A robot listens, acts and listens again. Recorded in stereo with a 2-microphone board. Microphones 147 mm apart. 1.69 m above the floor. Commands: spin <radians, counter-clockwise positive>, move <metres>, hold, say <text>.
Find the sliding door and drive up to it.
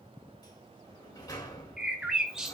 spin 0.44
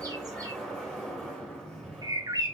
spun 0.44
move 1.0
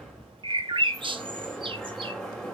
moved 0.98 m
move 1.0
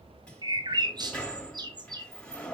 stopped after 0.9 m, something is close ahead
spin 0.17
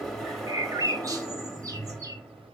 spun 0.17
say Arrived at the sliding door, straight ahead.